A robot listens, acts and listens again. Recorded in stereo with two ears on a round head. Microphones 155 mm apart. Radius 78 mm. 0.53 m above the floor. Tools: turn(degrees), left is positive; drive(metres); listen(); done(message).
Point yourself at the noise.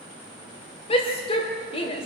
turn(degrees=30)
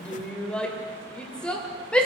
done("Facing the shout, 2 to 4 m away.")